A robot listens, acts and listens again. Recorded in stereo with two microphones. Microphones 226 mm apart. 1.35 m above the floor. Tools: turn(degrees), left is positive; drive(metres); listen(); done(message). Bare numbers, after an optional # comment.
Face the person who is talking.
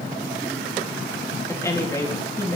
turn(30)
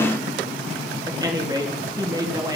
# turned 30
# So it is at 20° right.
turn(-20)
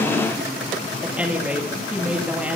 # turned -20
done("Facing the woman speaking.")